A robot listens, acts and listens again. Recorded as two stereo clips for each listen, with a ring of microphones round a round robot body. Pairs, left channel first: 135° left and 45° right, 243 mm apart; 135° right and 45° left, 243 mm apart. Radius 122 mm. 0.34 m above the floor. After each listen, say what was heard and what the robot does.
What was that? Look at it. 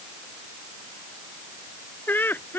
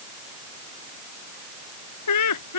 The laughter: 145° right. Turn 145° right.
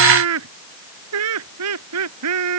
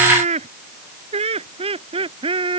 The laughter is now 25° right. Turn 25° right.
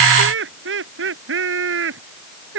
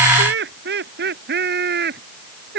Found it: laughter, straight ahead.